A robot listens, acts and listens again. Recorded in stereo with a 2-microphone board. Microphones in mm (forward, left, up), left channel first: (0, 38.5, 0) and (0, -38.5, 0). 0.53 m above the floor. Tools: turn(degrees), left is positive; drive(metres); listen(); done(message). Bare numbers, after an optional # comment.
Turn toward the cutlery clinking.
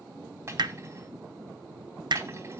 # The cutlery clinking: about 35° right or 145° right.
turn(-35)
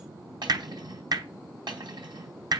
# So it is at 115° right.
turn(-115)
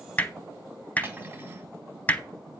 # The cutlery clinking is now 30° right.
turn(-30)
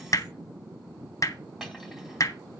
done("Found it: cutlery clinking, straight ahead.")